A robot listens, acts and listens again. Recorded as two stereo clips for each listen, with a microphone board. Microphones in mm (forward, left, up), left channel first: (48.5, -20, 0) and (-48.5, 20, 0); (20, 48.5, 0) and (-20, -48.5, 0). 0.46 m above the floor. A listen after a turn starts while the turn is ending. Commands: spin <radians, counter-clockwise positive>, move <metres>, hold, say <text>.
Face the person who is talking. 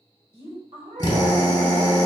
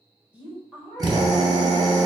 spin 2.97
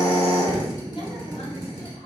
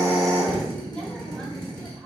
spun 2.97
spin -0.26
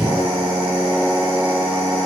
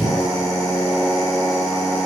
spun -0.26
hold
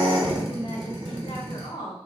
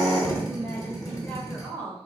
say Facing the woman speaking.